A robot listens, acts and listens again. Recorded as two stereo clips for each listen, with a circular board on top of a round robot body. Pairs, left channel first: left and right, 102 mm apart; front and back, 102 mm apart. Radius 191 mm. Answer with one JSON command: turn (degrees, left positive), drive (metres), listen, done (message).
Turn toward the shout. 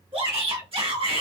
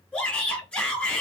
{"turn": -75}
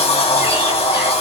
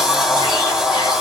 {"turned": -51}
{"turn": -25}
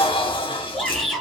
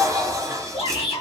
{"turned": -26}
{"done": "Found it: a shout, straight ahead, 1 to 2 m away."}